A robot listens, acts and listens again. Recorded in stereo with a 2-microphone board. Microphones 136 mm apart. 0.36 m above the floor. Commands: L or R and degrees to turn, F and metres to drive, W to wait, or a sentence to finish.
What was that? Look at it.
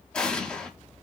L30
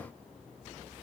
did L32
W
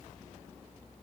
I heard an explosion, but can't make it out now. It was about 25° right or 140° left.